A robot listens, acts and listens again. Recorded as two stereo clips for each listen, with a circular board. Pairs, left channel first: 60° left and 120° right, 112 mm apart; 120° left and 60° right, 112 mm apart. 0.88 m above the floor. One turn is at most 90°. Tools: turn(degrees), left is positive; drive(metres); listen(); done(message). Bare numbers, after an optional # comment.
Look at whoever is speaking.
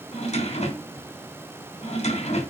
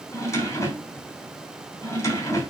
listen()
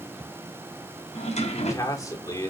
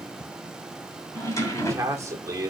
done("Found it: a man speaking, straight ahead.")